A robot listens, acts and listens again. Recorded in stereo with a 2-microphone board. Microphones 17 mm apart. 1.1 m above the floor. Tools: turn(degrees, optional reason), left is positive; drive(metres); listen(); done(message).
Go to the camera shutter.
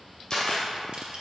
turn(degrees=40, reason="The camera shutter: about 40° left or 140° left.")
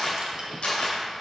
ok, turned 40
turn(degrees=100, reason="So it is at 100° left.")
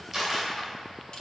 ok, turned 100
turn(degrees=-10, reason="The camera shutter is now 10° right.")
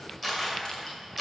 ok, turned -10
drive(metres=1.0)
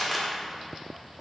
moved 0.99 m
drive(metres=1.0)
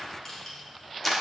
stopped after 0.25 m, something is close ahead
done("Arrived at the camera shutter, straight ahead.")